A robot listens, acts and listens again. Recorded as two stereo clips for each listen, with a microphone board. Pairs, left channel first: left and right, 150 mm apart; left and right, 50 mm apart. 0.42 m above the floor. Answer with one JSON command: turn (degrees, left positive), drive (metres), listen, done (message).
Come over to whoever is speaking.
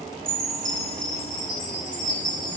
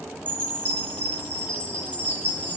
{"listen": true}
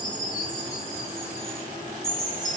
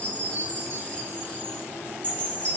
{"listen": true}
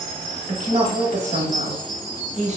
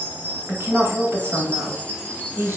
{"turn": -55}
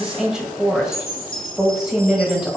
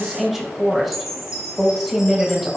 {"drive": 1.0}
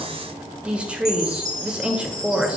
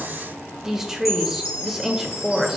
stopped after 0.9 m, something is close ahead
{"turn": -10}
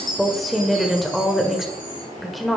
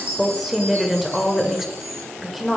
{"done": "Arrived at the woman speaking, straight ahead."}